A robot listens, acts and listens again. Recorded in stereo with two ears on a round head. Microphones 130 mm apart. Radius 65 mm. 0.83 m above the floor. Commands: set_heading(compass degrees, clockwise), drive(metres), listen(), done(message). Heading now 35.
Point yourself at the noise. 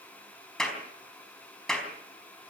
set_heading(5)
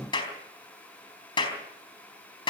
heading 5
set_heading(220)
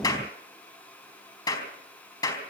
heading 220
set_heading(195)
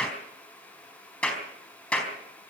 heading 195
set_heading(185)
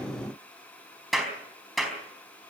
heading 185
done("Found it: a clap, straight ahead, over 4 m away.")